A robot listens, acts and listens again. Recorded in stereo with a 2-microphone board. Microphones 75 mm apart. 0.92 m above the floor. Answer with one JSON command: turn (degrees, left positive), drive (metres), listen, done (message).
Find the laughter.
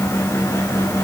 {"listen": true}
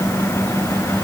{"listen": true}
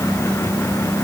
{"done": "I can't make out laughter."}